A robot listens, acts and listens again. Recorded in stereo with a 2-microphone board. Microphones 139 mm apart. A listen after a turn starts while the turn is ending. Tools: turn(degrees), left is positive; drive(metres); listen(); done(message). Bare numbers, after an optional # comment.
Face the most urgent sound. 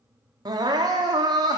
# The crying: about 30° right or 150° right.
turn(-30)
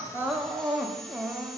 done("Found it: crying, straight ahead, under 1 m away.")